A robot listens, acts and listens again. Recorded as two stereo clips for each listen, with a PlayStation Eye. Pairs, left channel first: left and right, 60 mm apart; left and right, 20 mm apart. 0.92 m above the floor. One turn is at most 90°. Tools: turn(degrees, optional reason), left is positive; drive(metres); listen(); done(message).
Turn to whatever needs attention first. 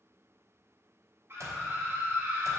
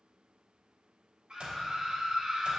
turn(degrees=-45, reason="The scream: about 45° right or 135° right.")
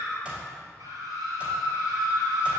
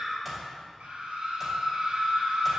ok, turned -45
turn(degrees=-90, reason="So it is at 90° right.")
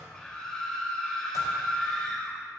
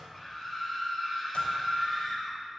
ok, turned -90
turn(degrees=10, reason="The scream is now 10° left.")
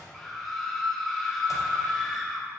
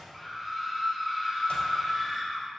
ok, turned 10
done("Facing the scream.")